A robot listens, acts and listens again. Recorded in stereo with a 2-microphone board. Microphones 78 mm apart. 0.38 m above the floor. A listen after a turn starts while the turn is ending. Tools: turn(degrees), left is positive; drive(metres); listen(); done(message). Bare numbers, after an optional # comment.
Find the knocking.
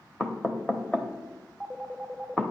# The knocking: about 15° left or 165° left.
turn(15)
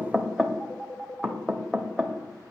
done("Found it: knocking, straight ahead, under 1 m away.")